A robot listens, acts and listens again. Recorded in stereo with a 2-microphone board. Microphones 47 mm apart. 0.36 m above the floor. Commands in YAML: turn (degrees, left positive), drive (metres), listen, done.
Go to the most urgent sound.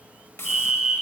turn: -30
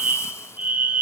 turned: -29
turn: -135
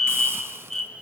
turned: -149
turn: 10
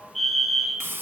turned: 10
drive: 1.0
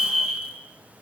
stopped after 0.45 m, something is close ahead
done: "Something is in my way. I am facing the fire alarm but have not reached it."